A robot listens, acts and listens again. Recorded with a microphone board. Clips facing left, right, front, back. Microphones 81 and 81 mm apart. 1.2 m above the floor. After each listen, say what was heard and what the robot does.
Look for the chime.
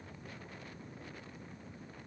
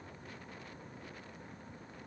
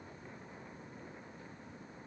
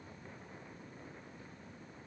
Keep listening.
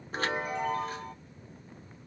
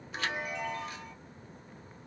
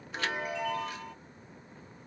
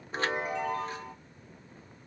The chime: 130° left. Turn 130° left.
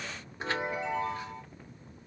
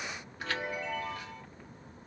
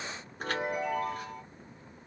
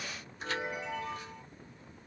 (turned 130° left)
The chime is now 30° left. Turn 30° left.
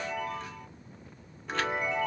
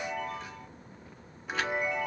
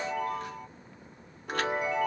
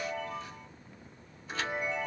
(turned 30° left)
Found it: a chime, straight ahead.